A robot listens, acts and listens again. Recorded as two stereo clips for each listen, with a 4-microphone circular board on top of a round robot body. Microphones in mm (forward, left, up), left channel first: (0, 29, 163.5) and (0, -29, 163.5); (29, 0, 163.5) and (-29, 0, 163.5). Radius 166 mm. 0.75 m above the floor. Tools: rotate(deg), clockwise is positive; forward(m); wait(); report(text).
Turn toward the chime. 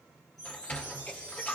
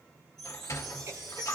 rotate(-90)
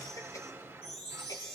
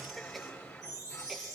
rotate(-15)
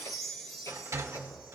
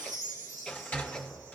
report("Found it: a chime, straight ahead, 1 to 2 m away.")